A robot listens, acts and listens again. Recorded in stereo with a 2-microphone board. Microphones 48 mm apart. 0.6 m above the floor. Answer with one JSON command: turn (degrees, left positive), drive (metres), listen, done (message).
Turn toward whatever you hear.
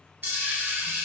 {"turn": -50}
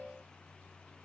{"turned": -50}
{"listen": true}
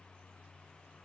{"done": "I heard a dropped coin, but can't make it out now. It was about straight ahead or 80° right."}